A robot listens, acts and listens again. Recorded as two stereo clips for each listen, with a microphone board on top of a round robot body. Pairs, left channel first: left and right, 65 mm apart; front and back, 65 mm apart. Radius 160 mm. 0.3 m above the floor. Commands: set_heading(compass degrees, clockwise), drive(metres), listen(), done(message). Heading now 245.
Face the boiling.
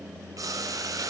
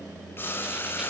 set_heading(300)
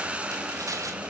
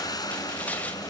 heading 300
set_heading(315)
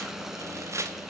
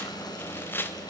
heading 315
listen()
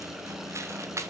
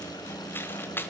listen()
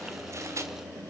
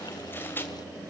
done("Facing where the boiling came from. I can't hear it now.")